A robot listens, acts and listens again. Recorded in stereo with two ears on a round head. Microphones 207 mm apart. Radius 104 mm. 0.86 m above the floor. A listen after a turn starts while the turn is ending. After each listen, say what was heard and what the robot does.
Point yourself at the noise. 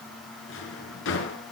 The drawer: about 55° left or 125° left. Turn 55° left.
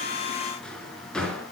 Found it: a drawer, straight ahead, over 4 m away.